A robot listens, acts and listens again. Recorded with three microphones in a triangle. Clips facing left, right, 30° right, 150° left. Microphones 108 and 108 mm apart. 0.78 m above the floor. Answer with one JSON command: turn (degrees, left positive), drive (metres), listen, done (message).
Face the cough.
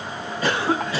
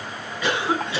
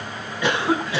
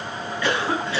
{"turn": 40}
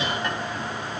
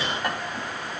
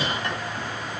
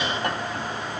{"listen": true}
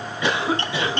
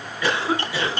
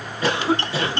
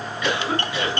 {"turn": 20}
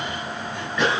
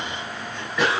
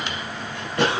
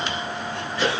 {"done": "Found it: a cough, straight ahead."}